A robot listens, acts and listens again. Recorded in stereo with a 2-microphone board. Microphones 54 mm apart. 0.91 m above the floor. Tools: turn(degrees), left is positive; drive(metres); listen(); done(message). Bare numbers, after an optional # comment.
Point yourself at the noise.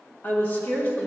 # The woman speaking: about 40° left or 140° left.
turn(40)
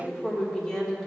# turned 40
# So it is at 10° left.
turn(10)
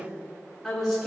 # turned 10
done("Found it: a woman speaking, straight ahead.")